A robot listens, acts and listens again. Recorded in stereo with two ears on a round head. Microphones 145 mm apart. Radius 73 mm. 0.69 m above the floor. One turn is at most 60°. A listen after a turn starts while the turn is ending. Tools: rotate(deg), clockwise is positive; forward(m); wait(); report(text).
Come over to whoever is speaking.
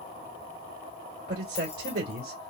rotate(60)
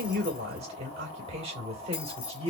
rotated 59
rotate(40)
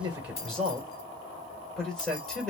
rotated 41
forward(1.0)
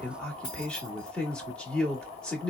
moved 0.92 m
forward(1.0)
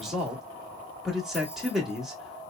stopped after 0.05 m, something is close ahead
report("I am next to the man speaking.")